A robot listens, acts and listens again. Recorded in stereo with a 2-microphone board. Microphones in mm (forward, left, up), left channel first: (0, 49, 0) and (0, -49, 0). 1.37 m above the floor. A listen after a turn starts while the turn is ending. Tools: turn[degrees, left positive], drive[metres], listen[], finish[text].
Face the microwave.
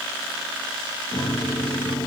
Thought: The microwave: about 70° left or 110° left.
Action: turn[70]
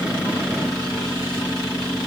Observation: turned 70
Action: finish[Found it: a microwave, straight ahead.]